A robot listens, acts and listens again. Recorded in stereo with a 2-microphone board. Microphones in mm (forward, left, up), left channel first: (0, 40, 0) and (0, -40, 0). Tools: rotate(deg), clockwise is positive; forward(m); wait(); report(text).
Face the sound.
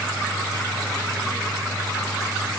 wait()
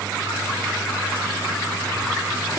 wait()
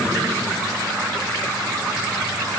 report("I can't make out anything.")